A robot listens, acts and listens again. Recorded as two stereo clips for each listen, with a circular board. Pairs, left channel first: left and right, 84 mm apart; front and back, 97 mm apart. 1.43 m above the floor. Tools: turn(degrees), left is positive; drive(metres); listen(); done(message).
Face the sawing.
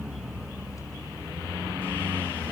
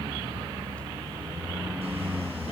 listen()
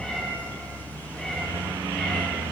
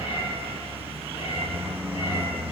listen()
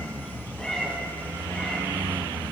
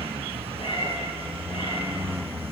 done("I can't make out sawing to turn to.")